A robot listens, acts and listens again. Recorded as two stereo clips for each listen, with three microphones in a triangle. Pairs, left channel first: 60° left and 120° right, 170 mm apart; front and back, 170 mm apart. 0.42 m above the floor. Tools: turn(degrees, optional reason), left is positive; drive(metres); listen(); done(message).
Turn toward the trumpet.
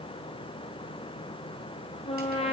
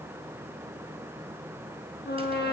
turn(degrees=10, reason="The trumpet: 10° left.")
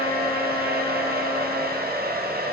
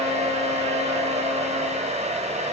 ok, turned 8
listen()
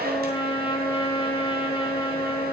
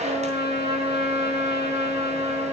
done("Found it: a trumpet, straight ahead.")